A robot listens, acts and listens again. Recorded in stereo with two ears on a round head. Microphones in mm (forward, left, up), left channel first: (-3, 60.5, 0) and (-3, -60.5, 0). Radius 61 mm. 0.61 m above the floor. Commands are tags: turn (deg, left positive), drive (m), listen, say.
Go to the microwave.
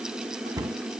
<listen/>
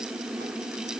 <listen/>
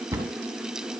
<say>I can't make out a microwave to turn to.</say>